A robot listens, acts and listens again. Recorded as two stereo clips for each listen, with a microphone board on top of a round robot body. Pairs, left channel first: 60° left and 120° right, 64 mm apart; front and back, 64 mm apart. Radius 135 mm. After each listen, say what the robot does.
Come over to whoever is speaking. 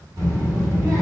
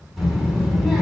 Turn 95° right.
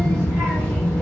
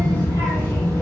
Drive 1.0 m forward.
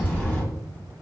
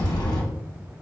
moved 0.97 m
Turn 15° right.
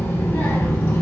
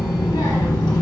Drive 1.0 m forward.
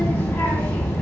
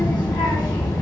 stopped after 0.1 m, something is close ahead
I am next to the child speaking.